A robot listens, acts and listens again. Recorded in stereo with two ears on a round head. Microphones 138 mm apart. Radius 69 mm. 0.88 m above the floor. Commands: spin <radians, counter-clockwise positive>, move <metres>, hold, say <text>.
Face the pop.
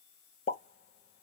spin 0.79
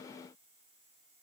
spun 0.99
hold
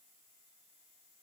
say I heard a pop, but can't make it out now. It was about 10° right or 80° left.